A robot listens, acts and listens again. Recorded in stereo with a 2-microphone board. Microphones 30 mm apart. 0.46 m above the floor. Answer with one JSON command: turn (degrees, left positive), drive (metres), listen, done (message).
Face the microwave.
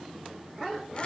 {"listen": true}
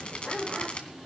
{"listen": true}
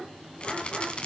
{"done": "I can't make out a microwave to turn to."}